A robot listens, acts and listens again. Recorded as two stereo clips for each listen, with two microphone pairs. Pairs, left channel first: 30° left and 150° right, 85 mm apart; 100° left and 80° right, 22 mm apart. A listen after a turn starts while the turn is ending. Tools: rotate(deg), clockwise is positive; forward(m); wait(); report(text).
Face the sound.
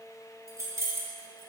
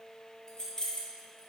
rotate(-155)
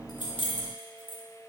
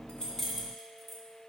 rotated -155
rotate(-15)
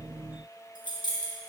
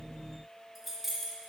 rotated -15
report("Facing the keys jangling.")